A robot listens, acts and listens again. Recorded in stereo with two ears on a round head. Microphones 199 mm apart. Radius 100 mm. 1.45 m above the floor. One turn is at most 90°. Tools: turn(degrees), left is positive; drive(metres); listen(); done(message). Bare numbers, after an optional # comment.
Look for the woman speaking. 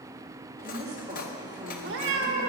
# The woman speaking: about 30° right or 150° right.
turn(-30)
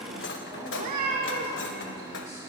listen()
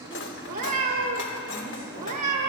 listen()
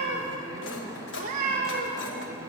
# So it is at 25° left.
turn(25)
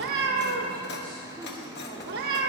listen()
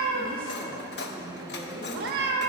done("Found it: a woman speaking, straight ahead, over 4 m away.")